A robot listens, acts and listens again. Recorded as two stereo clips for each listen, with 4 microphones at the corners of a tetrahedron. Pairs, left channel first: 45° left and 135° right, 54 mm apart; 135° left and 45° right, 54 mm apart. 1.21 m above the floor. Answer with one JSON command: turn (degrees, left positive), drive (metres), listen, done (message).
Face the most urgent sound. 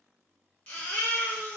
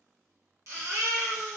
{"turn": -20}
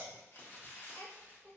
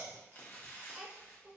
{"listen": true}
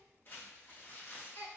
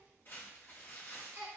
{"done": "Facing the baby crying."}